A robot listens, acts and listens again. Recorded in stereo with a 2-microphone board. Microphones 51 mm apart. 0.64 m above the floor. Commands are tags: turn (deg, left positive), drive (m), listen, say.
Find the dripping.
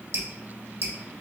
<turn deg="-65"/>
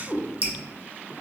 <turn deg="-35"/>
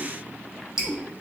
<turn deg="-20"/>
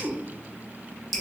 <say>Facing the dripping.</say>